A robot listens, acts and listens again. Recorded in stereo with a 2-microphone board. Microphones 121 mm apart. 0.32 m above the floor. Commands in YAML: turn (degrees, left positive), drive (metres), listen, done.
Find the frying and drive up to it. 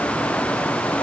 listen: true
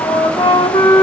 listen: true
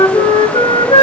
done: "I can't make out frying, only a flute."